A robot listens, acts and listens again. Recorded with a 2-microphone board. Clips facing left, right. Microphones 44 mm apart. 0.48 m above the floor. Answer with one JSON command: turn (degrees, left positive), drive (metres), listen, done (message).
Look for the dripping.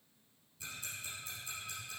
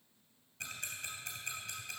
{"listen": true}
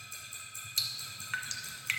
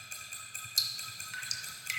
{"turn": 45}
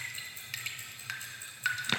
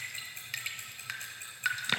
{"done": "Found it: dripping, straight ahead."}